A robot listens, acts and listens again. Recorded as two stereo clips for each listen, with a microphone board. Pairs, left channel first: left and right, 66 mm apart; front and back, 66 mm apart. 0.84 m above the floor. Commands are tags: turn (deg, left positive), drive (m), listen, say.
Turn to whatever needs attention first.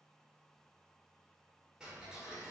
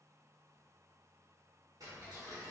<listen/>
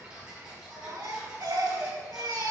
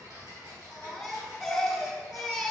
<turn deg="-90"/>
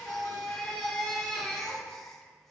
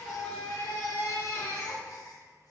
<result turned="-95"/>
<say>Facing the baby crying, 1 to 2 m away.</say>